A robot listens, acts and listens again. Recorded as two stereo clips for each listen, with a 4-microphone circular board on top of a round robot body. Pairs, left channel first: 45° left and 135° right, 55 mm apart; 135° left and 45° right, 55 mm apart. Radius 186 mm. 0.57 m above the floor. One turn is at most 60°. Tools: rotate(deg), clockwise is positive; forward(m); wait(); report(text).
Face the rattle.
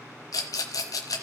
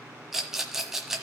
rotate(-40)
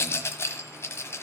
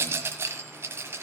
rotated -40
report("Facing the rattle.")